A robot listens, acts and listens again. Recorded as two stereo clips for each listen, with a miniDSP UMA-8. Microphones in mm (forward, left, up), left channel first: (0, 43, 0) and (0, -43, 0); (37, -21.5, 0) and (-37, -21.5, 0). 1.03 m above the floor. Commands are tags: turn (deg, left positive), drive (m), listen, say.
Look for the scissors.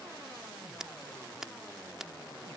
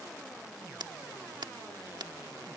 <turn deg="-175"/>
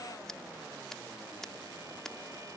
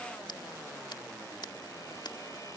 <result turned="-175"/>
<say>Found it: scissors, straight ahead.</say>